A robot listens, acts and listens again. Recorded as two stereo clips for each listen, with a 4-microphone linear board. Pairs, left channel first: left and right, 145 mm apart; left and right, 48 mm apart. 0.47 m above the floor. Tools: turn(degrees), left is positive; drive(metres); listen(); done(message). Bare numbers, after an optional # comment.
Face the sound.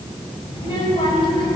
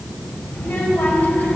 # The child speaking: about 35° left or 145° left.
turn(35)
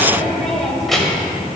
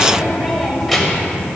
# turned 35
done("Facing the child speaking, 1 to 2 m away.")